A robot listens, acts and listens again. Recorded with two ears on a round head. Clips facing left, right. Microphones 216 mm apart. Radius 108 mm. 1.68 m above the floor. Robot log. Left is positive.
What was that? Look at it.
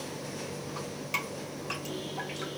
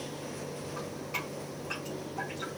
note: The dripping: about 65° left or 115° left.
cmd yaw +65
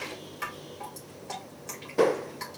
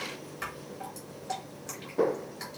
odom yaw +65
end: Facing the dripping, 2 to 4 m away.